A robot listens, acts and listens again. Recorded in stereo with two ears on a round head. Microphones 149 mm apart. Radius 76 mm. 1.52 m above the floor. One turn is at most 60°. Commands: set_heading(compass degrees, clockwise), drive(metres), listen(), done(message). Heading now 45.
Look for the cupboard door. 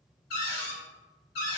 set_heading(345)
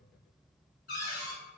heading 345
set_heading(300)
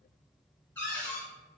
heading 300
set_heading(290)
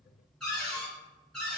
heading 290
done("Facing the cupboard door.")